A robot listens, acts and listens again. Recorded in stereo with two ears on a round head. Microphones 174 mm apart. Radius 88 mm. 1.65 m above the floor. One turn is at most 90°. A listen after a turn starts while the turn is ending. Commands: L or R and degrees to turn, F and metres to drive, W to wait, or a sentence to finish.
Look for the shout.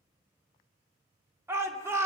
R30
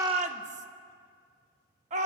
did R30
R90
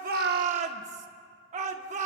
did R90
R45
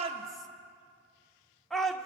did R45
Facing the shout, under 1 m away.